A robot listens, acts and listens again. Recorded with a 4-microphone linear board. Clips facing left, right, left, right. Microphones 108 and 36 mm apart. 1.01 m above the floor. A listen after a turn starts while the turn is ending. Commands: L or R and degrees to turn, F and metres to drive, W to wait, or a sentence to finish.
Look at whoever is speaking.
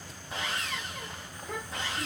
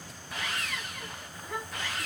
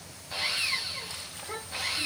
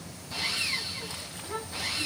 L75
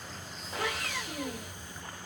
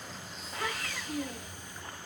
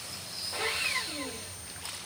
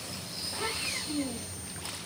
L30
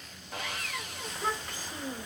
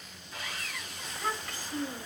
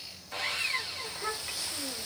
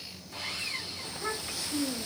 L20
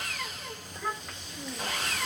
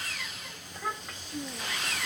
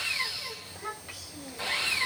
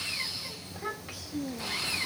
Found it: a child speaking, straight ahead.